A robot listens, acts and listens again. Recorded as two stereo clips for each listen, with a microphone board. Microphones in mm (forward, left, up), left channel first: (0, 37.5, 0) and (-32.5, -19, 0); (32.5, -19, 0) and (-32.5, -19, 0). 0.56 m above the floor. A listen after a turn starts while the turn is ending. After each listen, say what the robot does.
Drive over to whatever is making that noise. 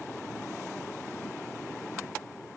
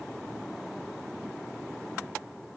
Keep listening.
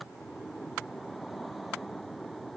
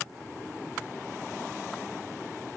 Keep listening.
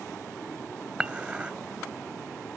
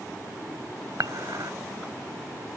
Turn 165° left.
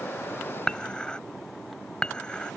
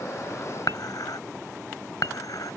Turn 15° right.
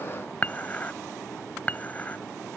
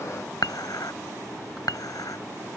Drive 1.0 m forward.
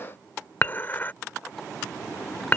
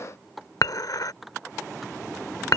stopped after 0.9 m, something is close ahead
I am next to the dishes clattering.